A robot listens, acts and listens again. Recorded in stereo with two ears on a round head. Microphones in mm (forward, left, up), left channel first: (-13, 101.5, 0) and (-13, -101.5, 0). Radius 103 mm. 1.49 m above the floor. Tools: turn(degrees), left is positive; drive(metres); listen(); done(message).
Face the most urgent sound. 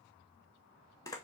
listen()
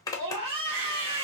turn(degrees=-25)
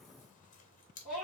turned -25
done("Found it: a scream, straight ahead, 1 to 2 m away.")